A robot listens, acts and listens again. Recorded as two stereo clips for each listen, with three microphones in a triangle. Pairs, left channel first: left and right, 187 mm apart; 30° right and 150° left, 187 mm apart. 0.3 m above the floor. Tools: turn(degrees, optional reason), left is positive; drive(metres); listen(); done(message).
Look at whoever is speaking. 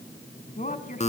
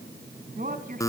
turn(degrees=120, reason="The woman speaking: 120° left.")
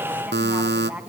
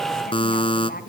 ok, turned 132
turn(degrees=-10, reason="The woman speaking is now 10° right.")
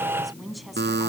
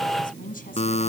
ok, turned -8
done("Facing the woman speaking.")